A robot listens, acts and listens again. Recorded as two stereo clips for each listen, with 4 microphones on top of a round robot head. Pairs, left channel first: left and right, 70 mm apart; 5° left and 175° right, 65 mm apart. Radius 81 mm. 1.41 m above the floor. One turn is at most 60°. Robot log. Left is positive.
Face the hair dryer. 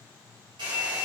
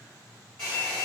note: The hair dryer: 75° right.
cmd yaw -60
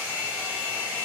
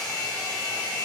note: The hair dryer is now 25° right.
cmd yaw -25
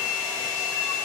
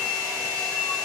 note: The hair dryer is now 10° right.
cmd yaw -10
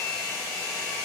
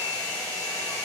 end: Facing the hair dryer.